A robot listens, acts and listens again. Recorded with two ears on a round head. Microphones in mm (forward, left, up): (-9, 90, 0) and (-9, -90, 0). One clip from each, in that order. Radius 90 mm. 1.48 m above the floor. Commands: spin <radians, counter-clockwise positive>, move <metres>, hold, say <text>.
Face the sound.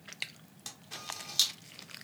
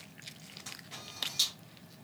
spin 0.61
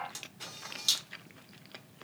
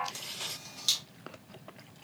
say Found it: a camera shutter, straight ahead, 1 to 2 m away.